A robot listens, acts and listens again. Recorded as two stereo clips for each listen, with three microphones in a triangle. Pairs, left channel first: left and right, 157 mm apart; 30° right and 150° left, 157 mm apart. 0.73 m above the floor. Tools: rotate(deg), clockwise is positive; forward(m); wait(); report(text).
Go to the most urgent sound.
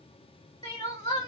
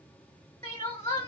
rotate(-30)
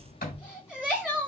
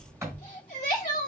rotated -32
forward(1.0)
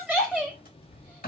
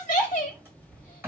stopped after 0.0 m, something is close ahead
report("Something is in my way. I am facing the crying but have not reached it.")